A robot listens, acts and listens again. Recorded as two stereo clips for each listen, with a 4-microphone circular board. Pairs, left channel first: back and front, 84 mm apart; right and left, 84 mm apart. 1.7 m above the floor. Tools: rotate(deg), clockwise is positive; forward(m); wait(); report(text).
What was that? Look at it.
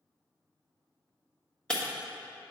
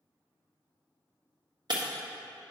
rotate(-100)
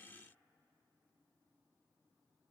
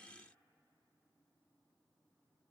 report("Facing where the breaking glass came from. I can't hear it now.")